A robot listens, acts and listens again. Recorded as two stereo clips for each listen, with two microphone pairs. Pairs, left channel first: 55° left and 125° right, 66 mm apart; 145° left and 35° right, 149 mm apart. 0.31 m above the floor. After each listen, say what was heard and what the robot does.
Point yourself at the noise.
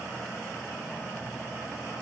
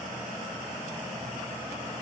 Keep listening.
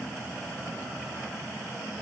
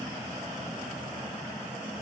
Keep listening.
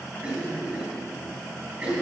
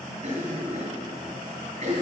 The cough: 60° right. Turn 60° right.
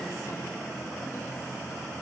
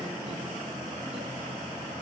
Keep listening.
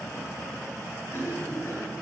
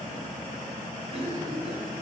Found it: a cough, straight ahead, 2 to 4 m away.